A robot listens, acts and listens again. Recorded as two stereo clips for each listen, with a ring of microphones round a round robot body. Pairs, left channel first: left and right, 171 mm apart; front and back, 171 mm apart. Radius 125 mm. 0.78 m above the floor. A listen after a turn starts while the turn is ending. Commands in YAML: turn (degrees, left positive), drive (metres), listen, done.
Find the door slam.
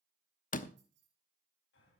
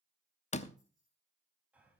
turn: 50
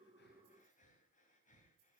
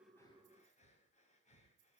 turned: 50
done: "Facing where the door slam came from. I can't hear it now."